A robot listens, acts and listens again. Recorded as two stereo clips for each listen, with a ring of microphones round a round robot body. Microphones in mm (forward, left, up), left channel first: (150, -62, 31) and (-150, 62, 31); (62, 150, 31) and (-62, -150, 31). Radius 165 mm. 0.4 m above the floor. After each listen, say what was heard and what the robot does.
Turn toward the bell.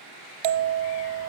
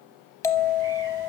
The bell: 150° left. Turn 150° left.
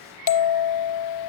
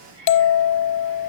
The bell is now 10° left. Turn 10° left.
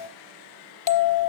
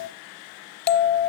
Found it: a bell, straight ahead, under 1 m away.